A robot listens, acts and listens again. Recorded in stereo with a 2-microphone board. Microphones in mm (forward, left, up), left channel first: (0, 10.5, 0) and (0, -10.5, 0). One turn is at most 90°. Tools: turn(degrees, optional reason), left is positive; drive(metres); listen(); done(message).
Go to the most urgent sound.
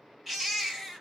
turn(degrees=-30)
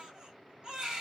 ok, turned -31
turn(degrees=-90, reason="So it is at 135° right.")
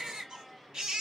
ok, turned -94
turn(degrees=-40, reason="The baby crying is now 40° right.")
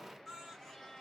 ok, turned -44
drive(metres=1.0)
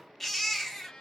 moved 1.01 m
turn(degrees=10, reason="The baby crying is now 10° left.")
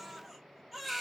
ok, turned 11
drive(metres=1.0)
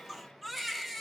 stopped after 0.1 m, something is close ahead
done("I am next to the baby crying.")